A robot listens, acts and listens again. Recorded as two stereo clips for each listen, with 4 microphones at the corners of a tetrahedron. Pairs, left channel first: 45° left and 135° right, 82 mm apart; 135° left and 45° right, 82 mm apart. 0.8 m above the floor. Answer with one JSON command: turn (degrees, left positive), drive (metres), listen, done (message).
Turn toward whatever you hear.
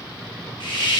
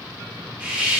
{"turn": 25}
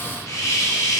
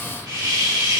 {"done": "Facing the hiss, under 1 m away."}